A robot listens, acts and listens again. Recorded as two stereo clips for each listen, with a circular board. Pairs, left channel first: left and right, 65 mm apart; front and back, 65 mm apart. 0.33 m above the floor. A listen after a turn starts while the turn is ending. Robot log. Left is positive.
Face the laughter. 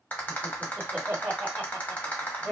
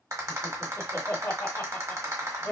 note: The laughter: 20° right.
cmd yaw -20
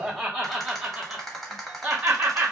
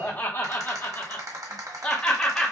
note: The laughter is now 65° right.
cmd yaw -65
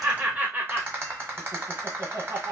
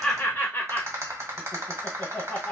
note: The laughter is now 75° right.
cmd yaw -75
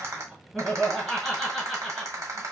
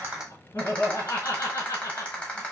end: Found it: laughter, straight ahead, 1 to 2 m away.